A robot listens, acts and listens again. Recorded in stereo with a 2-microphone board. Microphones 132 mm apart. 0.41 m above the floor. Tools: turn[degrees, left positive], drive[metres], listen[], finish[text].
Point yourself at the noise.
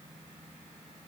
Action: listen[]
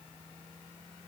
Action: listen[]
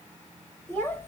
Thought: The child speaking: about 15° left or 165° left.
Action: turn[15]
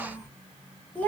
Action: turn[30]
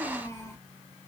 Thought: The child speaking: about 20° left or 160° left.
Action: turn[20]
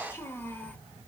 Action: turn[30]
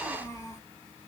Thought: So it is at 155° left.
Action: turn[155]
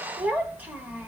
Thought: The child speaking is now 15° right.
Action: turn[-15]
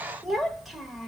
Action: finish[Facing the child speaking.]